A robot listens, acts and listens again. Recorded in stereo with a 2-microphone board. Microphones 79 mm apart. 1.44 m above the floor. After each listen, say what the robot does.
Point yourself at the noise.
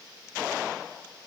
Keep listening.
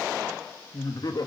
Turn 55° left.
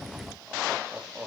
Turn 20° right.
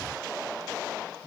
Keep listening.
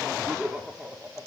Turn 15° right.
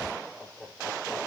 Facing the laughter.